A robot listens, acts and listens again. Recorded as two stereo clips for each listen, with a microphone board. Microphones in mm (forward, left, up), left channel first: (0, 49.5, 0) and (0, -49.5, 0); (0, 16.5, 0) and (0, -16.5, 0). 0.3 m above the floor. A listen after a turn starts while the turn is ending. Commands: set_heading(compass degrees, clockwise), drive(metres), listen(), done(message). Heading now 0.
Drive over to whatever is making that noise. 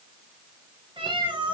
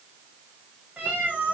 set_heading(50)
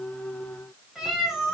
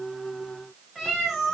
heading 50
drive(1.0)
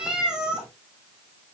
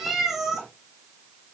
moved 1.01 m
drive(1.0)
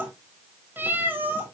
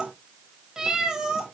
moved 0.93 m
set_heading(70)
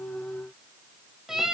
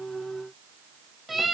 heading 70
drive(1.0)
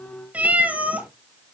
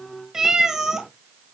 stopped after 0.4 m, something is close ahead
set_heading(85)
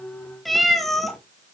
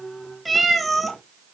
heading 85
done("I am next to the cat meowing.")